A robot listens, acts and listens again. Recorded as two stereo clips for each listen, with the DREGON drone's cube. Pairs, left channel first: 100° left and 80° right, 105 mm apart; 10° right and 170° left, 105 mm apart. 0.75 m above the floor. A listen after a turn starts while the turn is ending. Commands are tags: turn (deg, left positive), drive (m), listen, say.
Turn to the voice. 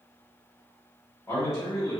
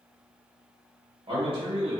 <turn deg="160"/>
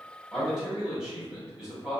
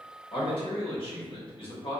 <say>Found it: a man speaking, straight ahead.</say>